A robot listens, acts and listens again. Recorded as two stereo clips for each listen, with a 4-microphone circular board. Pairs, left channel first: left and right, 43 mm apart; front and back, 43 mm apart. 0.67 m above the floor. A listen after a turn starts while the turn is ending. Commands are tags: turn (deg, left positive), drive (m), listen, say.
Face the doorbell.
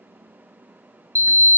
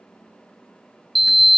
<listen/>
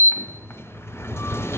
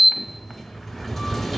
<listen/>
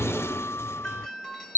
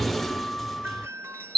<turn deg="165"/>
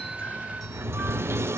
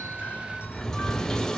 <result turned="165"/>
<listen/>
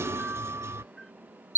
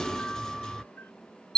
<listen/>
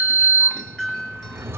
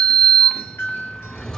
<say>Facing the doorbell, 2 to 4 m away.</say>